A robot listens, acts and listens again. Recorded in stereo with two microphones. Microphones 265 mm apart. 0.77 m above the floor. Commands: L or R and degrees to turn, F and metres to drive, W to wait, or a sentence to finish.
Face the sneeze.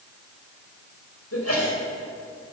L65
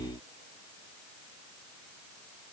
W
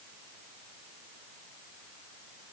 I heard a sneeze, but can't make it out now. It was about straight ahead or 50° left.